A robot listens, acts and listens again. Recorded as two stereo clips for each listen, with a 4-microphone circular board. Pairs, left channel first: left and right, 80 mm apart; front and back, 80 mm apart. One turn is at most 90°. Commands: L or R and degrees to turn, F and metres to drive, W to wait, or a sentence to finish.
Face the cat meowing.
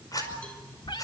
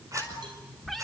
L90
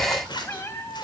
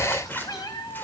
L35
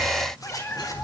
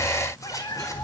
L30
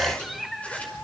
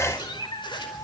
Found it: a cat meowing, straight ahead, 2 to 4 m away.